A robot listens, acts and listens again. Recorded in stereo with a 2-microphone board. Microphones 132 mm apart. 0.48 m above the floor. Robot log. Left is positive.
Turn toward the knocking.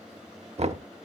note: The knocking: about 55° right or 125° right.
cmd yaw -55
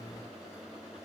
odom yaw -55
cmd idle
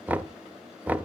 note: So it is at 15° right.
cmd yaw -15
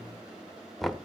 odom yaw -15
end: Found it: knocking, straight ahead.